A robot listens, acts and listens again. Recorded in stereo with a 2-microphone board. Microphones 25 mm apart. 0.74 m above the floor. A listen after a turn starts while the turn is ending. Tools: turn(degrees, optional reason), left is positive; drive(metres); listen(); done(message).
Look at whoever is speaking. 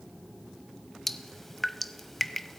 listen()
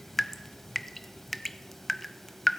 listen()
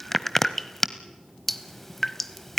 done("I can't make out anyone speaking, only dripping.")